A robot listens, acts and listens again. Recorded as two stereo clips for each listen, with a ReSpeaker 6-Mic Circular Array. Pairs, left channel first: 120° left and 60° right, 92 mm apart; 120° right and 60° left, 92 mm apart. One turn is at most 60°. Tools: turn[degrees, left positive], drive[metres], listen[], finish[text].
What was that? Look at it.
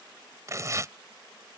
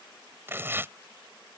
Action: finish[Found it: tearing paper, straight ahead.]